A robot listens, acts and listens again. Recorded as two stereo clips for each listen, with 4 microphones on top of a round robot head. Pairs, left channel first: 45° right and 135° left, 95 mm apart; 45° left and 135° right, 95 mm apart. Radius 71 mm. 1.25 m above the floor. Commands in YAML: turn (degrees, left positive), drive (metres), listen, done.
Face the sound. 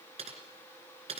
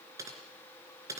turn: 165
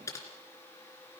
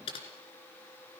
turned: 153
turn: 10
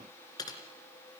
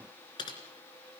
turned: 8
done: "Facing the typing on a keyboard."